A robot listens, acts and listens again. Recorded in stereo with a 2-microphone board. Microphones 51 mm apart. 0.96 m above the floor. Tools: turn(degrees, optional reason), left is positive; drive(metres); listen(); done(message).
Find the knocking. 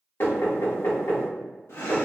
turn(degrees=55, reason="The knocking: about 55° left or 125° left.")
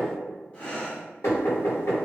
turn(degrees=70, reason="So it is at 70° left.")
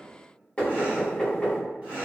turn(degrees=15, reason="The knocking is now 15° left.")
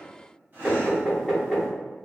done("Found it: knocking, straight ahead.")